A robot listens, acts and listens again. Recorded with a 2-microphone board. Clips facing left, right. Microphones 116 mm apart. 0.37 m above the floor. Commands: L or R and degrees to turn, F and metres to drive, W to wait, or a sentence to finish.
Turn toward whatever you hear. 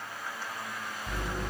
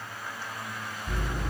L70
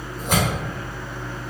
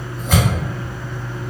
L20
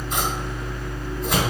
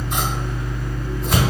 Found it: scissors, straight ahead, 1 to 2 m away.